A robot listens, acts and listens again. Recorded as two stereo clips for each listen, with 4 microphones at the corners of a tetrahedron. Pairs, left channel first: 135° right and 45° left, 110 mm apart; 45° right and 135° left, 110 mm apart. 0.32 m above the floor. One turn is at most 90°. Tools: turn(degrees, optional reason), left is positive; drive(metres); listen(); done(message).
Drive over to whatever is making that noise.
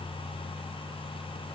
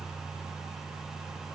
listen()
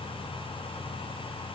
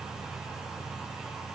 listen()
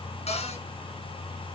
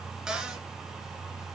turn(degrees=-90, reason="The cupboard door: 140° right.")
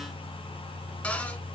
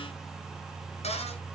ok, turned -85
turn(degrees=-55, reason="The cupboard door is now 55° right.")
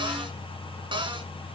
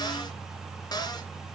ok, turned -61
drive(metres=1.0)
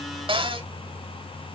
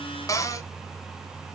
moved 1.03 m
turn(degrees=10, reason="The cupboard door is now 10° left.")
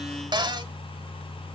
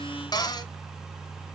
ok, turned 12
drive(metres=1.0)
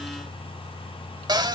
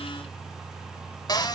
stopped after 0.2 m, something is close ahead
done("Arrived at the cupboard door, straight ahead.")